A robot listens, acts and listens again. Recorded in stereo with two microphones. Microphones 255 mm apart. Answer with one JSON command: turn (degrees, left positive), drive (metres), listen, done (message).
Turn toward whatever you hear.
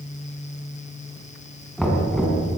{"turn": 30}
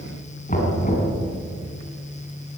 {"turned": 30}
{"turn": 150}
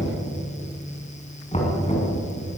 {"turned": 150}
{"turn": 25}
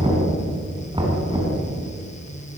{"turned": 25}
{"turn": -15}
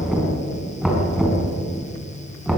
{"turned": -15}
{"done": "Found it: knocking, straight ahead."}